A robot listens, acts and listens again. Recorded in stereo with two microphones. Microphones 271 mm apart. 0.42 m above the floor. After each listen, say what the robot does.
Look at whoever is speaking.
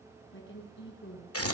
Turn 45° left.
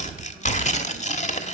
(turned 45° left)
Keep listening.
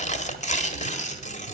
Keep listening.
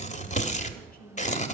I heard a woman speaking, but can't make it out now. It was about straight ahead or 90° left.